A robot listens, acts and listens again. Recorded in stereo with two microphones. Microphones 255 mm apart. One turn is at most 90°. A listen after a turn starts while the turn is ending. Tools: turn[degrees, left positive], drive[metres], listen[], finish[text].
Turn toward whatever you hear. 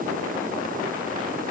Action: listen[]
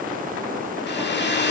Thought: The hair dryer: about 45° left or 135° left.
Action: turn[45]
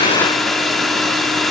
Action: finish[Facing the hair dryer, 2 to 4 m away.]